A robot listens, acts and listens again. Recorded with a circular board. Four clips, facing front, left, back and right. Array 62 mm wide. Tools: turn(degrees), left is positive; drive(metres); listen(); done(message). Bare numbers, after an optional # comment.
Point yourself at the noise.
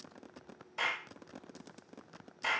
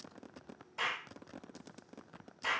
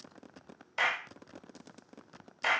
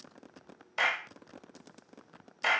# The clap: 120° right.
turn(-120)
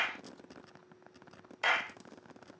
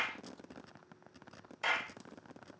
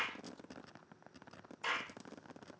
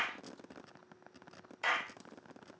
done("Found it: a clap, straight ahead.")